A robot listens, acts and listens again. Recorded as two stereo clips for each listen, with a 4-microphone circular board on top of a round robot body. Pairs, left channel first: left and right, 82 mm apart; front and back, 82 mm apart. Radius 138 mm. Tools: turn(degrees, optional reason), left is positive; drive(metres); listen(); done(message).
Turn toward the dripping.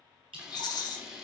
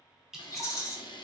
turn(degrees=-95, reason="The dripping: 95° right.")
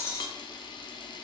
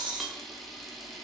listen()
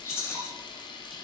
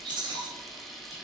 listen()
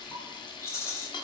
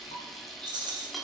done("I heard dripping from this way, but can't make it out now.")